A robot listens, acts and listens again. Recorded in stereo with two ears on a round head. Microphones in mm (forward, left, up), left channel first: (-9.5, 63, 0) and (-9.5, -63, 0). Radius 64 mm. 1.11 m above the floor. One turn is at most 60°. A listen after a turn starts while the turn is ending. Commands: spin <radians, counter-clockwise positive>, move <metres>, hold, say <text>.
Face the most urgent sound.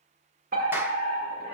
spin -1.05
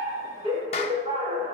spin -0.70
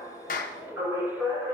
spin -0.26
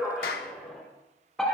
say Found it: a fire alarm, straight ahead, over 4 m away.